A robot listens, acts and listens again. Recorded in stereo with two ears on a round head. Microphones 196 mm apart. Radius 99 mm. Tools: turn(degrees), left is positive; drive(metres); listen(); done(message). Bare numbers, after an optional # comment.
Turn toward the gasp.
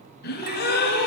# The gasp: about 45° left or 135° left.
turn(45)
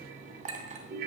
listen()
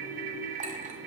done("I heard a gasp, but can't make it out now. It was about straight ahead or 90° left.")